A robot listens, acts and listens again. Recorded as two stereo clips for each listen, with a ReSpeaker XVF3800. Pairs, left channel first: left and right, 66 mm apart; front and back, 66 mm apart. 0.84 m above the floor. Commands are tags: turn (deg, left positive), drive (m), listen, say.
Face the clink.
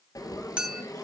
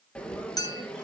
<turn deg="-15"/>
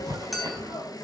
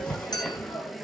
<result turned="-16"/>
<say>Found it: a clink, straight ahead.</say>